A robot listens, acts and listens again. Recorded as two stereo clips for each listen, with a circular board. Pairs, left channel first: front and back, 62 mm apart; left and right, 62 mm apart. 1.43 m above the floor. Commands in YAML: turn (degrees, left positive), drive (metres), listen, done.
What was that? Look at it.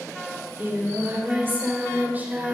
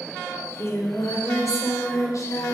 turn: 120
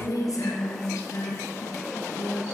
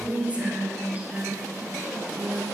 turn: -30
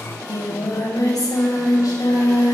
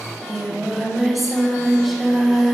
done: "Found it: singing, straight ahead."